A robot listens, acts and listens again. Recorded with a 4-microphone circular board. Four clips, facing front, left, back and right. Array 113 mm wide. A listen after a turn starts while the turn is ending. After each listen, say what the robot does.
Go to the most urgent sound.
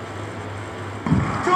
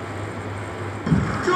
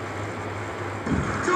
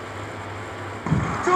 Turn 35° right.
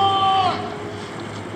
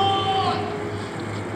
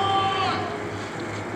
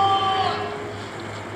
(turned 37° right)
Keep listening.
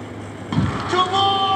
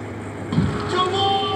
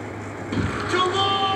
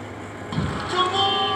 Drive 1.0 m forward.
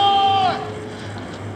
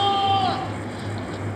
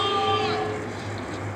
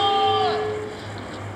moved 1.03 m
Drive 1.0 m forward.
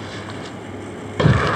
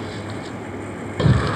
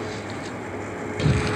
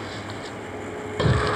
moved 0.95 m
Drive 1.0 m forward.
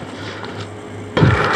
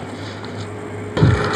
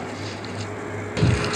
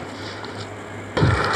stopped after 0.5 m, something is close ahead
Arrived at the shout, straight ahead.